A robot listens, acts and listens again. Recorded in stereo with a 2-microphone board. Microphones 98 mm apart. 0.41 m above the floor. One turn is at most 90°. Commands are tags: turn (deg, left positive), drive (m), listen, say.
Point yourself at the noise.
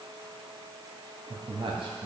<turn deg="-70"/>
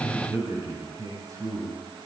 <turn deg="-40"/>
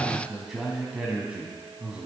<turn deg="-10"/>
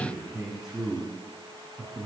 <say>Found it: a man speaking, straight ahead.</say>